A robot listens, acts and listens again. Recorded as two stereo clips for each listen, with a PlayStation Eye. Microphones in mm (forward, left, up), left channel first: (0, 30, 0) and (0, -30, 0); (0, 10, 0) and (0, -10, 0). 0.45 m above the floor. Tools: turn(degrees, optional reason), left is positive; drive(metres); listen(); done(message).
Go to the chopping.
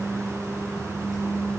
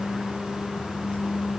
listen()
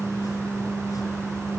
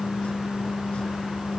listen()
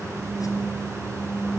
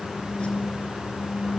done("I can't make out chopping to turn to.")